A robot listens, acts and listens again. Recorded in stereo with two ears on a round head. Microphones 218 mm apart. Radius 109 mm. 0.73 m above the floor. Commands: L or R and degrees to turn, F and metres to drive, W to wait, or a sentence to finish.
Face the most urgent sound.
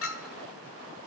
W
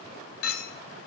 W
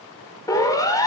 L30
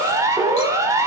R15
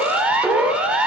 Found it: a siren, straight ahead.